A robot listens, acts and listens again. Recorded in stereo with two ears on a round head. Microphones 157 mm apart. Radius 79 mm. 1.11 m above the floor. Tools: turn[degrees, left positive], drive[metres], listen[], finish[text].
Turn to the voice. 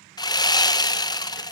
Action: listen[]
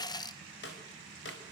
Action: listen[]
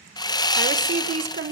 Thought: The woman speaking: about 45° right or 135° right.
Action: turn[-45]
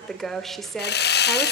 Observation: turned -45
Action: finish[Found it: a woman speaking, straight ahead.]